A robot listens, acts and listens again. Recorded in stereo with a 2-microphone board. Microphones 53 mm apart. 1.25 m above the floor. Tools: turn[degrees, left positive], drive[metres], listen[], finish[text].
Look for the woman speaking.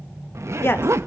Thought: The woman speaking: about 50° left or 130° left.
Action: turn[50]
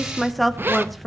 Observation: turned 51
Action: finish[Found it: a woman speaking, straight ahead.]